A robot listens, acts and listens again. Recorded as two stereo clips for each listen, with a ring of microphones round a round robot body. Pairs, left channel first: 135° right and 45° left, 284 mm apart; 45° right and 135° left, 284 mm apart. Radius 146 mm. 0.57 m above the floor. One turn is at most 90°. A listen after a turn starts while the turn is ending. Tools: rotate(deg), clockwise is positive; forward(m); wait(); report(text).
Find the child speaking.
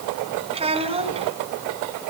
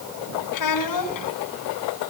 rotate(25)
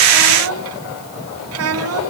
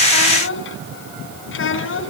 report("Facing the child speaking.")